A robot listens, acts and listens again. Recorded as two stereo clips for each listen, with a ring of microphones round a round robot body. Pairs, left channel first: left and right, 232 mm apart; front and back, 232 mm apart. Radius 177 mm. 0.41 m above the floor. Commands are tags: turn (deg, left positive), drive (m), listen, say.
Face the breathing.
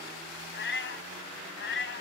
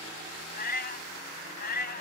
<listen/>
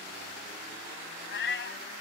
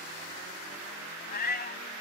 <listen/>
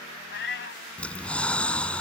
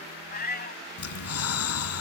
<say>Facing the breathing.</say>